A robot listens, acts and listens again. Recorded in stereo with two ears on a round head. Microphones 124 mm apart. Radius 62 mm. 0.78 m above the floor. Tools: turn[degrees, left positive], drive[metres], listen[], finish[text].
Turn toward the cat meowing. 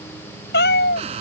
Thought: The cat meowing: about 75° left or 105° left.
Action: turn[75]
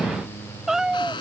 Action: finish[Found it: a cat meowing, straight ahead.]